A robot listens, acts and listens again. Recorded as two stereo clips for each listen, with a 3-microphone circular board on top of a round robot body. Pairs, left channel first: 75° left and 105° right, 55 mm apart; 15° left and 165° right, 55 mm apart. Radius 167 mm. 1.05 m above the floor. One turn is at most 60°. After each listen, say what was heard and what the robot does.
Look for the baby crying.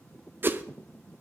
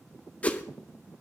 Keep listening.
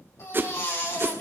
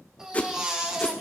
The baby crying: 115° left. Turn 60° left.
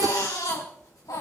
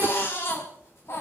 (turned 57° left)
The baby crying is now 60° left. Turn 60° left.
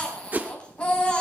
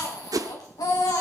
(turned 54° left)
Facing the baby crying, 2 to 4 m away.